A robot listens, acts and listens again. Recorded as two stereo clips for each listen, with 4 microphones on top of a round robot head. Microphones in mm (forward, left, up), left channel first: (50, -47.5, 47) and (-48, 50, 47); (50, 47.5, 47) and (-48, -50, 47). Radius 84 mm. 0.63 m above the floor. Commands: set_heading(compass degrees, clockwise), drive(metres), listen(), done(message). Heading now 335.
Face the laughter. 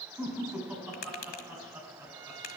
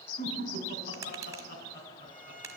set_heading(280)
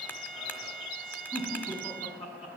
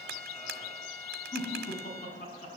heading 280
set_heading(270)
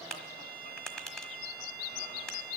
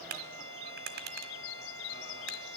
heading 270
listen()
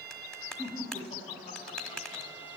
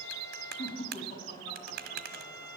done("Facing the laughter, over 4 m away.")